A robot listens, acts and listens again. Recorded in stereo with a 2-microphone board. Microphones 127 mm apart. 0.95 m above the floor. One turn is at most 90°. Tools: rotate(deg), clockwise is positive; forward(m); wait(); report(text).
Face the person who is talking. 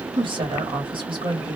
rotate(40)
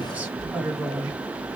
rotate(15)
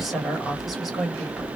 report("Facing the woman speaking, 1 to 2 m away.")